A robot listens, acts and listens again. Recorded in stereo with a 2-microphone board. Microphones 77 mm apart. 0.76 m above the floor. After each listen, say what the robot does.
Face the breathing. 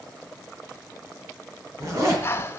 Turn 35° left.
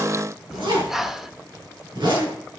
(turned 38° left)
Facing the breathing.